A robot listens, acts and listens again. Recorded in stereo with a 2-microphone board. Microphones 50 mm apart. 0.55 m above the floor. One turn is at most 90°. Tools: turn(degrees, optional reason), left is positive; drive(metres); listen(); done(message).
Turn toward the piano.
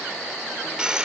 listen()
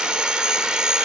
listen()
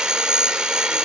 done("I can't make out a piano to turn to.")